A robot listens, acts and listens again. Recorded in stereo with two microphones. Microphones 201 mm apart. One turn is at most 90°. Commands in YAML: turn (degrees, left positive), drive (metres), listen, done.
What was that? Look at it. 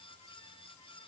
listen: true
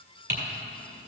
turn: -55
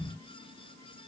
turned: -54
listen: true
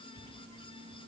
listen: true
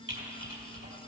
turn: -70
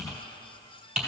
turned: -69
done: "Facing the typing on a keyboard."